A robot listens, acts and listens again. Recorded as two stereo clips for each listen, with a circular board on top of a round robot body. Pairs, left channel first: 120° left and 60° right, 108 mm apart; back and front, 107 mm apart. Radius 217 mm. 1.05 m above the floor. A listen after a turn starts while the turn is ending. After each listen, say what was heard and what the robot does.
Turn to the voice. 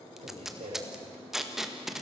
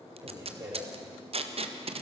The man speaking: 60° right. Turn 60° right.
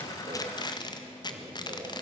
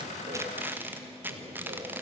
Keep listening.
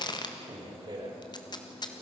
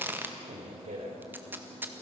The man speaking is now 10° right. Turn 10° right.
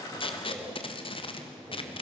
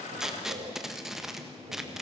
Keep listening.
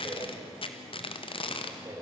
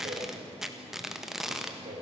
Found it: a man speaking, straight ahead, over 4 m away.